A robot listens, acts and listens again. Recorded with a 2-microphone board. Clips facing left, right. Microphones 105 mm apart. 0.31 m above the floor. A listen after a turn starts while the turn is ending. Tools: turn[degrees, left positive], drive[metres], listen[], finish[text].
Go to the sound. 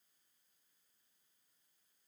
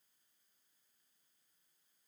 Action: listen[]
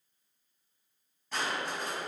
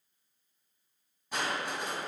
Action: turn[-30]
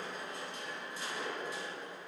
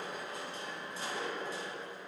Thought: So it is at 135° right.
Action: turn[-135]
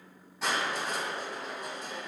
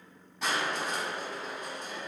Thought: The crushing is now 10° left.
Action: turn[10]
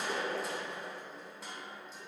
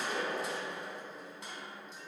Action: drive[1.0]
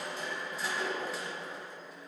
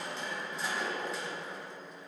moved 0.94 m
Action: drive[1.0]
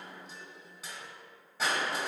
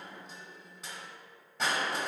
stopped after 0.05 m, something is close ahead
Action: finish[I am next to the crushing.]